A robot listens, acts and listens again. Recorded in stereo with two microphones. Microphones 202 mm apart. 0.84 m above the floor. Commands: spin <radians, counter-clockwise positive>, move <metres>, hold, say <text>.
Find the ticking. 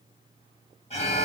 hold
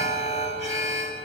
hold
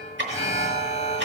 spin -1.05
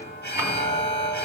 hold
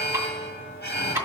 spin -0.26
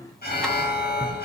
say Found it: ticking, straight ahead.